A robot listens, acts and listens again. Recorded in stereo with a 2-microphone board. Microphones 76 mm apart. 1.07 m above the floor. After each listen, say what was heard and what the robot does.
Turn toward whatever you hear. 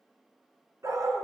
The dog barking: about 45° right or 135° right. Turn 45° right.
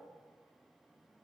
Keep listening.
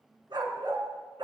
So it is at 90° right. Turn 90° right.
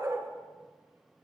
The dog barking is now 40° right. Turn 40° right.
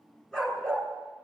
The dog barking is now 10° left. Turn 10° left.
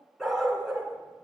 Facing the dog barking.